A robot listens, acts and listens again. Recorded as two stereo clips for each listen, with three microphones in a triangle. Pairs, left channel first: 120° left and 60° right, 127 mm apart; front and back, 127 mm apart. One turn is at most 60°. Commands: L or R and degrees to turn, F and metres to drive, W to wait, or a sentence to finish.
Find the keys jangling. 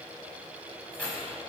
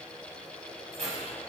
R60
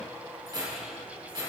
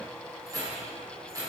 R60
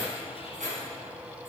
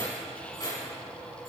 R60
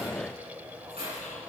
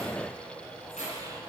R25
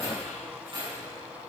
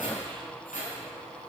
R10
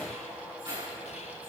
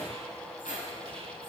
Found it: keys jangling, straight ahead, over 4 m away.